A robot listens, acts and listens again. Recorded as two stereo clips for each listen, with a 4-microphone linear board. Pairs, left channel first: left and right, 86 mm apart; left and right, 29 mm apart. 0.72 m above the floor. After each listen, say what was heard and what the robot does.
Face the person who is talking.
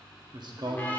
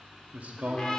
The man speaking: about 60° right or 120° right. Turn 60° right.
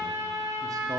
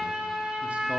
Keep listening.
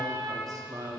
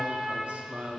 So it is at 50° right. Turn 50° right.
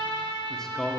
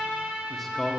Found it: a man speaking, straight ahead.